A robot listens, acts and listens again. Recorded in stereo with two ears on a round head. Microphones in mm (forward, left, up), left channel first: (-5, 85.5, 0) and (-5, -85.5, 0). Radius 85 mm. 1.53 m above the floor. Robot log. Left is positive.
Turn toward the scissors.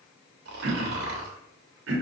cmd idle
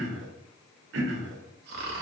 cmd idle
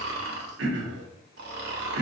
end: I can't make out scissors to turn to.